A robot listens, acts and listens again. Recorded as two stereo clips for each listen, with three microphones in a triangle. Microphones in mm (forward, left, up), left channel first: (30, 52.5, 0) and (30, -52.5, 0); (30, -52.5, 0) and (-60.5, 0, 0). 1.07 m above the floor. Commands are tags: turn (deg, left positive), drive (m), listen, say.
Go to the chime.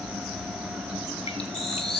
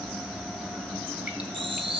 <turn deg="180"/>
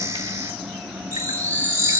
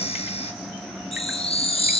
<turn deg="-25"/>
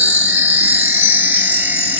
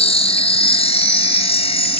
<turn deg="-15"/>
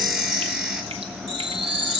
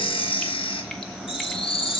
<drive m="1.0"/>
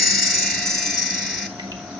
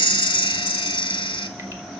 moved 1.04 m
<drive m="1.0"/>
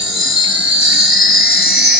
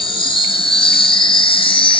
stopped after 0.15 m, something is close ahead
<say>Arrived at the chime, straight ahead.</say>